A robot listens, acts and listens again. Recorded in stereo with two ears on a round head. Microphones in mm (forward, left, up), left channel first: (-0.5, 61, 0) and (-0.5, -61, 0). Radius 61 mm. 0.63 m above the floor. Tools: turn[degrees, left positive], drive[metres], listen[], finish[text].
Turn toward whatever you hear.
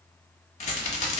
Thought: The rattle: about 55° left or 125° left.
Action: turn[55]
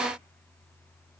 Action: listen[]
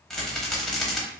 Action: finish[Found it: a rattle, straight ahead, under 1 m away.]